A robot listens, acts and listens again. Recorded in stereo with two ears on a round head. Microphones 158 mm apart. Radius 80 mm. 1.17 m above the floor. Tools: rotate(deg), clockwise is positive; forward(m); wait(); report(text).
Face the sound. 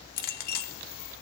rotate(-55)
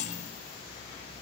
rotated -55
rotate(-50)
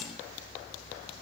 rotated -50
wait()
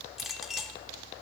report("Found it: a clink, straight ahead.")